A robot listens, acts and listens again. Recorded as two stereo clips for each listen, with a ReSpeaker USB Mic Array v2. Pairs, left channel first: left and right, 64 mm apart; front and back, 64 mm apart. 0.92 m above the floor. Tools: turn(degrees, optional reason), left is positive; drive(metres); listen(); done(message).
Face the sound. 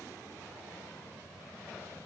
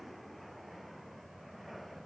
listen()
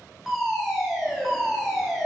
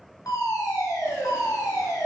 done("Facing the fire alarm, over 4 m away.")